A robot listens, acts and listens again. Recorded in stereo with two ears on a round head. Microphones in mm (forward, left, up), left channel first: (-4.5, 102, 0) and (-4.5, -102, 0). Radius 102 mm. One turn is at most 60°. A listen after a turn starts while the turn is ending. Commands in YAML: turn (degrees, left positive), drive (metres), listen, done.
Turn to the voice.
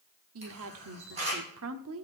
turn: -60
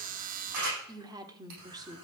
turn: -20
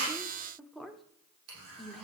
done: "Facing the woman speaking, 1 to 2 m away."